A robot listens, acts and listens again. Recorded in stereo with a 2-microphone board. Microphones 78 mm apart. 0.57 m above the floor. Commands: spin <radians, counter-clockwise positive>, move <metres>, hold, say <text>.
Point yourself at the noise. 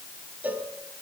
spin -0.35
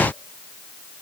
hold
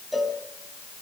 say Found it: a cowbell, straight ahead.